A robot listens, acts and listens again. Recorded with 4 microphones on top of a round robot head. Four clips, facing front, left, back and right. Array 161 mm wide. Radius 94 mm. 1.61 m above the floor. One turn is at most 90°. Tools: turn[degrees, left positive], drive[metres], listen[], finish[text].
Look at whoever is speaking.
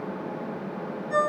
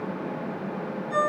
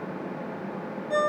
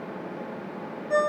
Action: listen[]
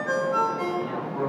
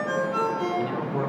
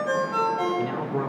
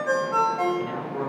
Thought: The man speaking: 165° left.
Action: turn[90]
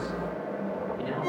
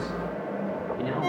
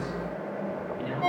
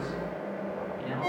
Thought: Nothing new. It was at 75° left.
Action: turn[75]
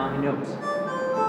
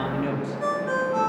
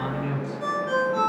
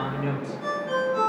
Thought: The man speaking is now 20° left.
Action: turn[20]
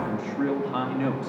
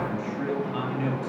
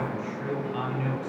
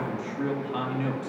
Action: finish[Found it: a man speaking, straight ahead.]